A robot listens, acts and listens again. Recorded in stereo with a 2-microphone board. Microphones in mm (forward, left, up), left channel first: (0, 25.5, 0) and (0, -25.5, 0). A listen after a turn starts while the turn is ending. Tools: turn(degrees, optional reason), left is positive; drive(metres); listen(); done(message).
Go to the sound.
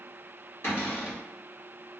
turn(degrees=60, reason="The cupboard door: about 60° left or 120° left.")
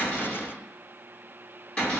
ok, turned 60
turn(degrees=20, reason="So it is at 20° left.")
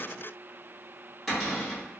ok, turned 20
drive(metres=1.0)
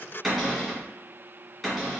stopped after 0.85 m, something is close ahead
turn(degrees=-10, reason="The cupboard door is now 10° right.")
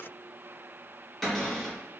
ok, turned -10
done("I am next to the cupboard door.")